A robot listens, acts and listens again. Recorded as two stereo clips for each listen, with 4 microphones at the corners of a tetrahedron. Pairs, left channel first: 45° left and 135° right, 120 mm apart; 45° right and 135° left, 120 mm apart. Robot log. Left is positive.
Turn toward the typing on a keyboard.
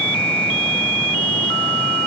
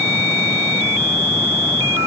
cmd idle
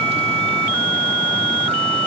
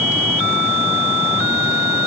cmd idle
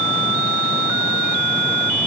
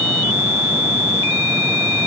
end: I can't make out typing on a keyboard.